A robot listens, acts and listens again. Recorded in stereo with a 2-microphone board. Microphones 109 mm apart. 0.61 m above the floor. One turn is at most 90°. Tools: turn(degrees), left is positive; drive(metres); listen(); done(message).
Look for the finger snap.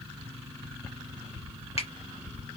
listen()
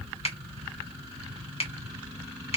turn(degrees=60)
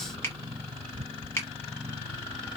turn(degrees=25)
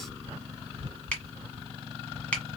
turn(degrees=15)
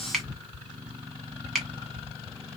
done("Found it: a finger snap, straight ahead.")